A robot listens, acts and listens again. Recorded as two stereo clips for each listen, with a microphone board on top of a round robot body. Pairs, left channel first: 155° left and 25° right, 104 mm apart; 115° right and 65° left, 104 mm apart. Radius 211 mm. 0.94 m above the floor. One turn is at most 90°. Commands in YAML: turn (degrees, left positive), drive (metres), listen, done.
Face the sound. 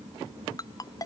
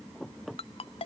turn: -90
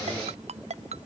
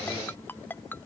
turn: -40
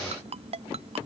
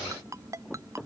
done: "Facing the ringtone."